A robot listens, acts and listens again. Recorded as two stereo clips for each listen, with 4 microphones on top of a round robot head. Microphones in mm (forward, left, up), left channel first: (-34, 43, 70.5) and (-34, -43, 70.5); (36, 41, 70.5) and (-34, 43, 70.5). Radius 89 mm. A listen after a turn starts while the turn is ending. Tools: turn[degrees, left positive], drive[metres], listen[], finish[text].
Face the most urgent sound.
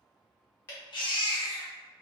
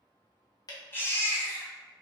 Thought: The baby crying: 60° left.
Action: turn[60]
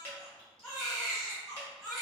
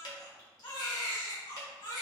Action: finish[Facing the baby crying.]